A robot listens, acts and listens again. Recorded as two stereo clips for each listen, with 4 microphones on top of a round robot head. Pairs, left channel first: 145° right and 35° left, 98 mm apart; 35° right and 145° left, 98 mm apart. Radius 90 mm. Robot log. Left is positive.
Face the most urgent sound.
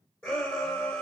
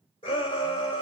note: The shout: 75° right.
cmd yaw -75
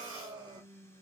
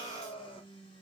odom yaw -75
note: The shout is now 25° right.
cmd yaw -25
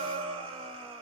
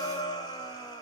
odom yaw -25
end: Facing the shout, 2 to 4 m away.